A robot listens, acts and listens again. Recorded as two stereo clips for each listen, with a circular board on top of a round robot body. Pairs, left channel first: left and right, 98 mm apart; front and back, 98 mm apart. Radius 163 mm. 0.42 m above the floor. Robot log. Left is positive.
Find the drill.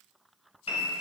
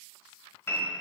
cmd idle
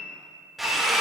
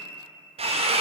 note: The drill: straight behind.
cmd yaw +180
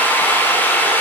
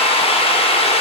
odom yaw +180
note: The drill is now 20° left.
cmd yaw +20
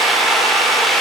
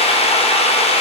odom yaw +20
end: Found it: a drill, straight ahead.